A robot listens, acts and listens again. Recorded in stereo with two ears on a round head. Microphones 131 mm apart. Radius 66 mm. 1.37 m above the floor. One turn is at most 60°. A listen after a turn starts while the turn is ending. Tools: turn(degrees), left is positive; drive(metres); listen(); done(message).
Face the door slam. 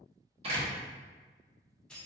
turn(degrees=-40)
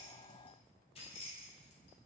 listen()
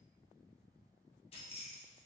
done("I heard a door slam, but can't make it out now. It was about straight ahead or 100° right.")